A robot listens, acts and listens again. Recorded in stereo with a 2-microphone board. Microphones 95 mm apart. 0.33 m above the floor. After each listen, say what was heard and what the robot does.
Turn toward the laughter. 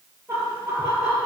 Turn 30° right.
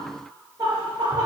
So it is at 145° right. Turn 145° right.
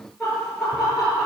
Facing the laughter.